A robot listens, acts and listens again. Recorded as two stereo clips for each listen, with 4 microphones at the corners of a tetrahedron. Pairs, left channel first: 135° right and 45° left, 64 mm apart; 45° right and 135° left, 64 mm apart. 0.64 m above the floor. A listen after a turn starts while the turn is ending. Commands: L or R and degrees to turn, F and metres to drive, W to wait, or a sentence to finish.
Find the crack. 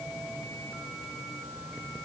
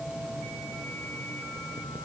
W
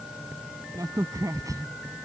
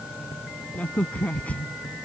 L20
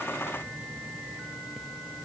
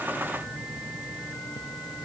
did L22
Facing where the crack came from. I can't hear it now.